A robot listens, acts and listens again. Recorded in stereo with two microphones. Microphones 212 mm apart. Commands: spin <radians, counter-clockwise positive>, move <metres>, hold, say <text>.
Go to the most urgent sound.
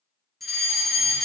spin 0.52
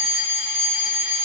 spin -0.44
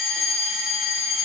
move 1.0
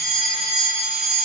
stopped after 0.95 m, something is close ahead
say I am next to the fire alarm.